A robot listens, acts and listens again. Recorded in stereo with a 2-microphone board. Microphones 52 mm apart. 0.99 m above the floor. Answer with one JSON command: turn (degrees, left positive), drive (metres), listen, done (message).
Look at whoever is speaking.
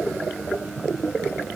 {"listen": true}
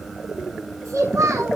{"turn": -90}
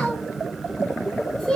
{"done": "Facing the child speaking."}